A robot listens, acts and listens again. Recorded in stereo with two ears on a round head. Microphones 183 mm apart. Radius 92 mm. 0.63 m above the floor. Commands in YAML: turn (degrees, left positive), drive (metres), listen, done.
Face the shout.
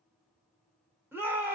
turn: -30
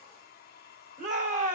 turn: -135
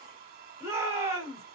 turn: -15
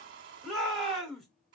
done: "Found it: a shout, straight ahead, 2 to 4 m away."